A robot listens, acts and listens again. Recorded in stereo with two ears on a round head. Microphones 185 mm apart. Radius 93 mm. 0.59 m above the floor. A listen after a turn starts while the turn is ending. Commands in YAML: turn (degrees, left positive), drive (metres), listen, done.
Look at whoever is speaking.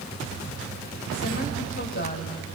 turn: 45
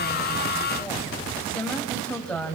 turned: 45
done: "Facing the woman speaking."